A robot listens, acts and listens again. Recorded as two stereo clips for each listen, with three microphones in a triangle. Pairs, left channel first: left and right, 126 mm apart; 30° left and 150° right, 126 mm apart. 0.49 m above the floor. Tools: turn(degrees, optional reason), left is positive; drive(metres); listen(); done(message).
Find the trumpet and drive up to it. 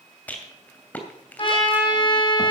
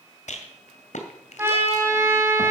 turn(degrees=140, reason="The trumpet: 140° left.")
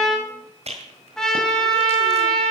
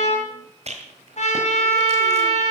drive(metres=1.0)
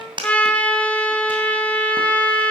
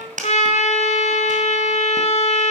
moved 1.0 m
turn(degrees=10, reason="The trumpet is now 10° left.")
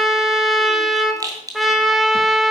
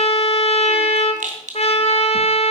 drive(metres=1.0)
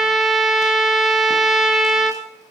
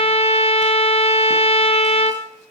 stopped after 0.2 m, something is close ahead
done("I am next to the trumpet.")